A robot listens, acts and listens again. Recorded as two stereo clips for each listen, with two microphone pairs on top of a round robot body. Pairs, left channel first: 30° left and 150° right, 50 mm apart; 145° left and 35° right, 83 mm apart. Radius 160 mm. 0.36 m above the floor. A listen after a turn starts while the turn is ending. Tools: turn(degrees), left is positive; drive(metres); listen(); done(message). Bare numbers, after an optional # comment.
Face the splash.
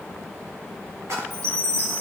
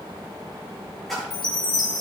# The splash: 130° right.
turn(-130)
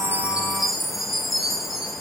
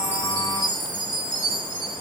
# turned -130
done("Facing where the splash came from. I can't hear it now.")